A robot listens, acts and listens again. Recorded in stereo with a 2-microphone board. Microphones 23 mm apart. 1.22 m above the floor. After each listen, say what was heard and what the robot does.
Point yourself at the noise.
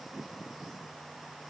Keep listening.
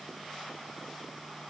Keep listening.
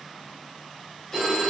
The phone ringing: about 30° left or 150° left. Turn 30° left.
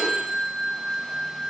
Found it: a phone ringing, straight ahead, over 4 m away.